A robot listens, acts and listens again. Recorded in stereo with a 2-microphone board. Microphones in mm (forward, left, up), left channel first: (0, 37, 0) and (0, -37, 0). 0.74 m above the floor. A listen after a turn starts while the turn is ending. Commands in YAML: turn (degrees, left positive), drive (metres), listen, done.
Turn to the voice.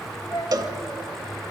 turn: 70
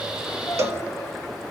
listen: true
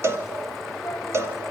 listen: true
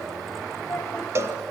turn: 40
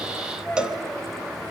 turn: 10
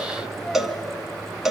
done: "Facing the child speaking."